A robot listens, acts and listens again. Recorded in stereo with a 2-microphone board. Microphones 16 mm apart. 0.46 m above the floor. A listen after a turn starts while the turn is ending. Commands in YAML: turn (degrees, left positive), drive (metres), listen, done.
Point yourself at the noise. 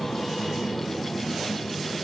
listen: true
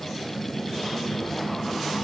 listen: true
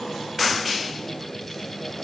done: "I can't make out anything to turn to."